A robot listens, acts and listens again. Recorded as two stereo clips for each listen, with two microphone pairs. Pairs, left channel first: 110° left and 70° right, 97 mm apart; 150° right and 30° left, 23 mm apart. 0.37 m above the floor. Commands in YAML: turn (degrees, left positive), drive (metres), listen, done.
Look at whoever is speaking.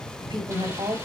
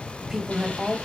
turn: -50
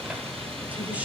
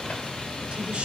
done: "Facing the woman speaking."